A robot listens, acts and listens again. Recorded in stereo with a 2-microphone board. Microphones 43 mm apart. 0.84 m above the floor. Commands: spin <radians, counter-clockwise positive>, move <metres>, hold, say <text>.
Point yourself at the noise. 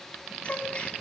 spin 0.52
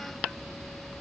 hold
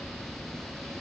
say I heard a gasp, but can't make it out now. It was about straight ahead or 120° left.